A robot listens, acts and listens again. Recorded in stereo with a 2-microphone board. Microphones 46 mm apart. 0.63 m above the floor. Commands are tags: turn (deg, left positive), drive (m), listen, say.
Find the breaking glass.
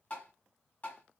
<listen/>
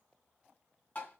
<listen/>
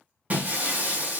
<turn deg="-35"/>
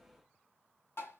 <listen/>
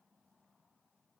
<say>I heard breaking glass, but can't make it out now. It was about straight ahead or 110° right.</say>